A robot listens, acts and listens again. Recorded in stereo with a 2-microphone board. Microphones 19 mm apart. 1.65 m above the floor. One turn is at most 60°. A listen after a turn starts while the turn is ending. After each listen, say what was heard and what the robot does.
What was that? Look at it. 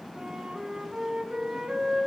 The flute: about 60° right or 120° right. Turn 60° right.
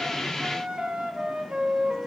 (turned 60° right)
So it is at 60° right. Turn 60° right.
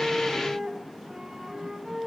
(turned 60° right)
The flute is now 35° right. Turn 35° right.
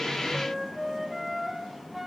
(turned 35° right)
The flute is now 10° right. Turn 10° right.
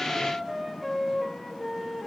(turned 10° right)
Facing the flute, under 1 m away.